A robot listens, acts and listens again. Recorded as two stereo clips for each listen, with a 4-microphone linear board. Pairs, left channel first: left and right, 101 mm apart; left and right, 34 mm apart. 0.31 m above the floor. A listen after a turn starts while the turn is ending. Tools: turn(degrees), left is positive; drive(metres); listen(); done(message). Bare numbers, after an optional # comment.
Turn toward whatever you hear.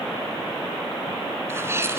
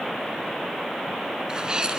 # The sneeze: about 25° right or 155° right.
turn(-25)
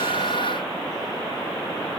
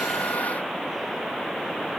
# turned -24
listen()
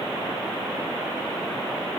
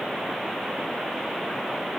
done("I heard a sneeze, but can't make it out now. It was about straight ahead or 130° right.")